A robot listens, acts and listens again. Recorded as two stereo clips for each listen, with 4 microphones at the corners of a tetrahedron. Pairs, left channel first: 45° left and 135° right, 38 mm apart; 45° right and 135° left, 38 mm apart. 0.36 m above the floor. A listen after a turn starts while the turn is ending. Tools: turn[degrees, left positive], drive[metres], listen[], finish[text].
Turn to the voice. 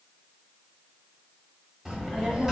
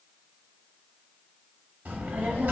Thought: The child speaking: 155° left.
Action: turn[155]
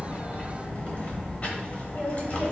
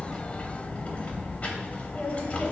Action: finish[Facing the child speaking.]